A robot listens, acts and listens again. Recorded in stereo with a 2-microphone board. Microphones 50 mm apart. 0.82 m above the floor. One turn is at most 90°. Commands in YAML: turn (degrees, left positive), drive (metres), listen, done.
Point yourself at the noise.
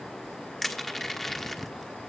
turn: 30
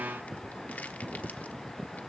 listen: true
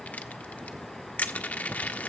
turn: 90
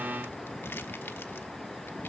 turn: 55
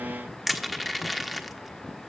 done: "Facing the crushing."